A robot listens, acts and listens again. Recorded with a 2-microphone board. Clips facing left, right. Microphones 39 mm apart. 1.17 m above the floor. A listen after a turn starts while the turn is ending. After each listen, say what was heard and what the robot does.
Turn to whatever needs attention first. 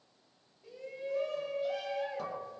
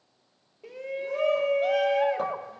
Turn 90° right.
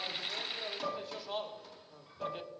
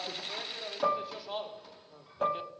Facing the shout, 1 to 2 m away.